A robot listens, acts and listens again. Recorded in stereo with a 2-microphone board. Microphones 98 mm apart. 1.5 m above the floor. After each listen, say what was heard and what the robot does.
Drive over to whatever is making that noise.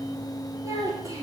The child speaking: about 35° right or 145° right. Turn 35° right.
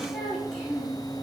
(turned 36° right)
Drive 1.0 m forward.
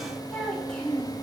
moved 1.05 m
Drive 1.0 m forward.
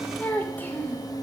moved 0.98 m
The child speaking is now 15° left. Turn 15° left.
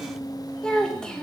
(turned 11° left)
Drive 1.0 m forward.
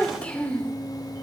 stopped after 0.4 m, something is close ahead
The child speaking is now 10° left. Turn 10° left.
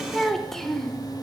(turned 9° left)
Arrived at the child speaking, straight ahead.